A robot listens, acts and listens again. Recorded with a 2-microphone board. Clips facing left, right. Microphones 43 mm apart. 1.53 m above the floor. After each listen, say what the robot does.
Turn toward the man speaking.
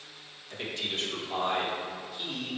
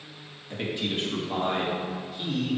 Turn 30° right.
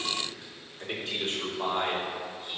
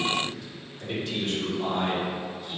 Turn 35° left.
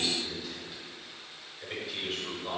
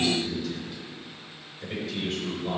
Found it: a man speaking, straight ahead.